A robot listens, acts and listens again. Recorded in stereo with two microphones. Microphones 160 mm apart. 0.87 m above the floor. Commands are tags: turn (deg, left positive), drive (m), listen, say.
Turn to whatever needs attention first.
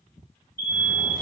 <turn deg="65"/>
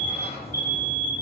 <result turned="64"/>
<turn deg="15"/>
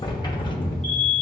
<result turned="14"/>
<say>Found it: an alarm, straight ahead, 1 to 2 m away.</say>